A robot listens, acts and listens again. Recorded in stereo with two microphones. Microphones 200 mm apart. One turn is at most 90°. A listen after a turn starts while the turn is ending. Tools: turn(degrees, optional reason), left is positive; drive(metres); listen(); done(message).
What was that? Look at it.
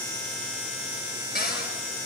turn(degrees=55, reason="The cupboard door: about 55° left or 125° left.")
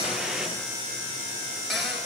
done("Found it: a cupboard door, straight ahead.")